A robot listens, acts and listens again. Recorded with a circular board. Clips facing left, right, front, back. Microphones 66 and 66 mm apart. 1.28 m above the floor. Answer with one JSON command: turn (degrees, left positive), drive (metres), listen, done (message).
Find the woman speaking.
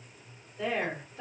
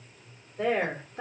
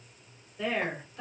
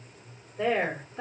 {"turn": -125}
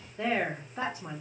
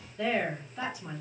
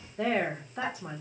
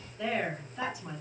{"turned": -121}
{"turn": 40}
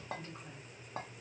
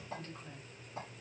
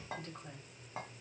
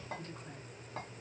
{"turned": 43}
{"listen": true}
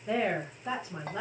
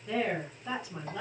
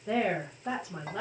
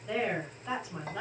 {"turn": 35}
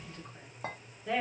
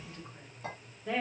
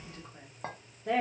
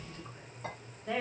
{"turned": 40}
{"done": "Facing the woman speaking, 1 to 2 m away."}